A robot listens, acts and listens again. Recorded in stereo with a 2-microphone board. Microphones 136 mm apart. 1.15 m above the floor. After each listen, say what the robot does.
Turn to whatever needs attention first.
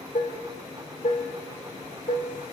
Keep listening.
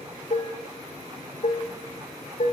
Keep listening.
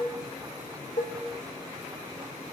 I can't make out anything urgent to turn to.